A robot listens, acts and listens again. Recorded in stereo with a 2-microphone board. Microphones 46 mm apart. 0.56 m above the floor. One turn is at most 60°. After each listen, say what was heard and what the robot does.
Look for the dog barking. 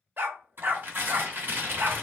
The dog barking: about 50° right or 130° right. Turn 50° right.
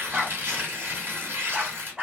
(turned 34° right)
So it is at 15° right. Turn 15° right.
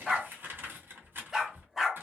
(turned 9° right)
Facing the dog barking, under 1 m away.